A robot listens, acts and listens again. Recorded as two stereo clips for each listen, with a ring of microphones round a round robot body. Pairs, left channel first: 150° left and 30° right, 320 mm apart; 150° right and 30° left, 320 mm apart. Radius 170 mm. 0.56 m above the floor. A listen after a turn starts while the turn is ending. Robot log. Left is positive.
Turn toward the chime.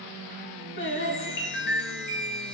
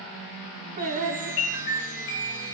note: The chime: 155° right.
cmd yaw -155
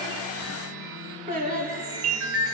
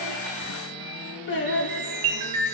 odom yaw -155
note: The chime is now 15° left.
cmd yaw +15
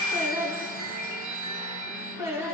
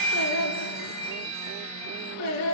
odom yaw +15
end: Facing the chime.